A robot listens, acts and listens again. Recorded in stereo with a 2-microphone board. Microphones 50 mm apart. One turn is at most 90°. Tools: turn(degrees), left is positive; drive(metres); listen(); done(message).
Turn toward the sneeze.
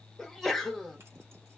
turn(degrees=30)
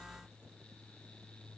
listen()
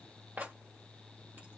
done("I heard a sneeze, but can't make it out now. It was about 25° right or 145° left.")